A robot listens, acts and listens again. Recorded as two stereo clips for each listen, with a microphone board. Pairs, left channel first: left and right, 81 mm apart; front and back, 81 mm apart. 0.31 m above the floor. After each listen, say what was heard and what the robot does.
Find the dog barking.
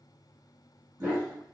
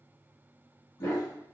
The dog barking: 35° right. Turn 35° right.
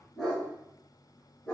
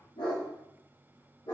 The dog barking is now 10° left. Turn 10° left.
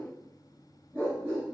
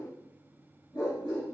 The dog barking is now 15° left. Turn 15° left.
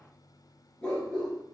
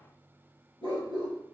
The dog barking is now 10° left. Turn 10° left.
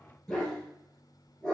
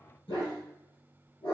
Facing the dog barking, 2 to 4 m away.